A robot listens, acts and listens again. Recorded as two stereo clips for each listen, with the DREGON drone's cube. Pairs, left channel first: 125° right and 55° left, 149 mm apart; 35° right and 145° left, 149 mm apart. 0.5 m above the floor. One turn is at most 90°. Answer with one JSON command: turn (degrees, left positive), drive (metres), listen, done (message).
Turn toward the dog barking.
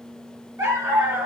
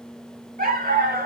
{"turn": 90}
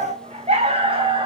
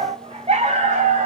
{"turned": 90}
{"turn": 90}
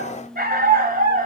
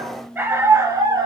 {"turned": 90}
{"turn": 85}
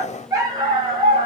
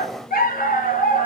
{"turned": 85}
{"done": "Facing the dog barking."}